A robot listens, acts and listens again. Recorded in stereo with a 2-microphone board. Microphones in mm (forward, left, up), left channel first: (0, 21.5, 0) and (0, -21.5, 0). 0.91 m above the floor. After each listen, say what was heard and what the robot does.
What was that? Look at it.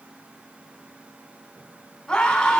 The scream: about 15° left or 165° left. Turn 15° left.
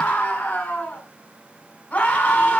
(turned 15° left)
So it is at 150° left. Turn 150° left.
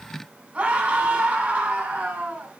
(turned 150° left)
The scream is now 25° right. Turn 25° right.
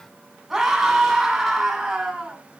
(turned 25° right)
Facing the scream.